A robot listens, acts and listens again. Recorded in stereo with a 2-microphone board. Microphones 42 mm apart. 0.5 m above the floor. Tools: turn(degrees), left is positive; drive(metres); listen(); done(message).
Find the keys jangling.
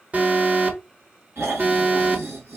listen()
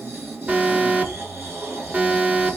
listen()
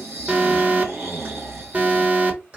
turn(degrees=-35)
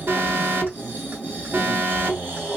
listen()
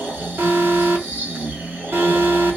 listen()
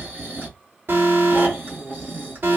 done("I heard keys jangling, but can't make it out now. It was about straight ahead or 110° right.")